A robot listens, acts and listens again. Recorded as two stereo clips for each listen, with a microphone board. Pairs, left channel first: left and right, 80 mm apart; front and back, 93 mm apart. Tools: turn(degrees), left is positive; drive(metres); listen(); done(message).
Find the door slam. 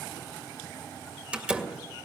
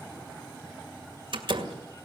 turn(degrees=-165)
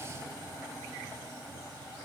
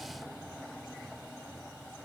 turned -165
done("Facing where the door slam came from. I can't hear it now.")